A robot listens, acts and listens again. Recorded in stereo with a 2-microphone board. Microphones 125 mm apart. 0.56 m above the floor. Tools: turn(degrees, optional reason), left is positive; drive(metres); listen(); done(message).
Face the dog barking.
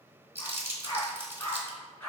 turn(degrees=30)
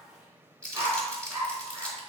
turn(degrees=-20, reason="So it is at 20° right.")
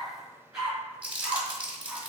turn(degrees=-10, reason="The dog barking is now 10° right.")
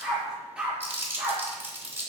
done("Facing the dog barking.")